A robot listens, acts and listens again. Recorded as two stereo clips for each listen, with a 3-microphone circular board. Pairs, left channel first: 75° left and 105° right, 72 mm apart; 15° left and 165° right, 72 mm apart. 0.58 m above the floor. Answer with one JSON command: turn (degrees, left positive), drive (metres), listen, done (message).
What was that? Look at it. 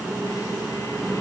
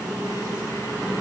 {"listen": true}
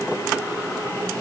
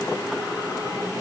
{"listen": true}
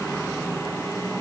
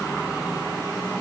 {"done": "I can't make out anything."}